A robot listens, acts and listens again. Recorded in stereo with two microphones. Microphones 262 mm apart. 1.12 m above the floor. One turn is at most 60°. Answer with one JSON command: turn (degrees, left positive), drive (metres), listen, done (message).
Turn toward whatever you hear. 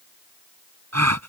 {"turn": -60}
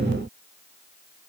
{"turn": -30}
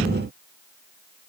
{"done": "Facing where the gasp came from. I can't hear it now."}